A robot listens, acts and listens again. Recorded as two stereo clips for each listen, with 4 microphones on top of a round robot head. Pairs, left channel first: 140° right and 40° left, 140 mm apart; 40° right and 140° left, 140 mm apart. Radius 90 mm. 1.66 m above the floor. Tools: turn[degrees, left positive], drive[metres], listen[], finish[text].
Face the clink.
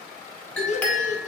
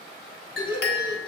Thought: The clink: 60° right.
Action: turn[-60]
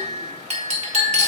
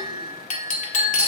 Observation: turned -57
Action: finish[Facing the clink.]